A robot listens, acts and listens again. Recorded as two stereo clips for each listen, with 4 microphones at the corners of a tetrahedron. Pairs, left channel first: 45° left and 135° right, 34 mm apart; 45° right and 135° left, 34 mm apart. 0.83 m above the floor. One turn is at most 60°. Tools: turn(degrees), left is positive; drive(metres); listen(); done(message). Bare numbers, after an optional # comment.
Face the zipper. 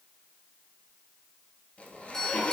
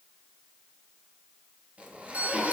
# The zipper: 90° left.
turn(60)
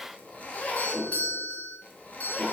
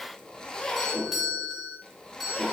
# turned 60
# The zipper is now 20° left.
turn(20)
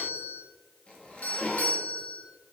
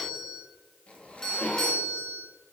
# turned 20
done("Facing the zipper.")